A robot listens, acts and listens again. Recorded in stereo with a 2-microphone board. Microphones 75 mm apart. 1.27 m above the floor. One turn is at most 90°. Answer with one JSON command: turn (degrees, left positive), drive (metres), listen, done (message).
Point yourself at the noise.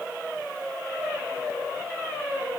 {"listen": true}
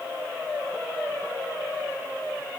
{"listen": true}
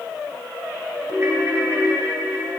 {"turn": -30}
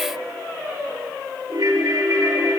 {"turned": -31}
{"turn": -90}
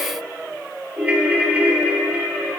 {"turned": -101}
{"turn": -20}
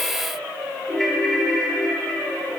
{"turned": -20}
{"done": "Facing the ringtone."}